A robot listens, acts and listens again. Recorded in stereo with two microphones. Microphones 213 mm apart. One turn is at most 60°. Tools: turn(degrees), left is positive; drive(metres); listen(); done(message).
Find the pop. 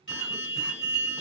listen()
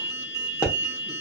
turn(degrees=30)
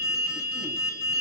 listen()
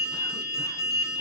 done("I heard a pop, but can't make it out now. It was about 20° right or 140° left.")